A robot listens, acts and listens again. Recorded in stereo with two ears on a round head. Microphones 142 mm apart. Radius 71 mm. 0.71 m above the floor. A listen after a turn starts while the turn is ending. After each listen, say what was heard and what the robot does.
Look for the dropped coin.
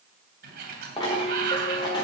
The dropped coin: about 30° left or 150° left. Turn 30° left.
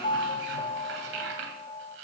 Keep listening.
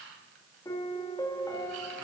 I heard a dropped coin, but can't make it out now. It was about straight ahead or 120° left.